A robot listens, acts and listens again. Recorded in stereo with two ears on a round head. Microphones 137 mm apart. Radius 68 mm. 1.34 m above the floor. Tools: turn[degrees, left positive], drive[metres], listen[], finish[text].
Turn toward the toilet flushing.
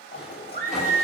Thought: The toilet flushing: about 40° left or 140° left.
Action: turn[40]
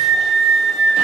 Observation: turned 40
Action: listen[]
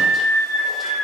Action: listen[]
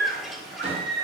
Action: finish[Found it: a toilet flushing, straight ahead.]